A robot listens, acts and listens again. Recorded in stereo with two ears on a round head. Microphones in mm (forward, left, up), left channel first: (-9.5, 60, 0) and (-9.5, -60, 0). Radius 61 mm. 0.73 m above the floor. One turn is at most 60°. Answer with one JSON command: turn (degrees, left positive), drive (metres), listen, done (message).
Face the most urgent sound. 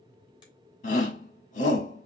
{"turn": 60}
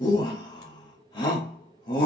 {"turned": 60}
{"turn": 40}
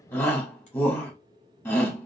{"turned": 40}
{"turn": 20}
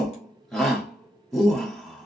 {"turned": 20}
{"done": "Found it: a shout, straight ahead."}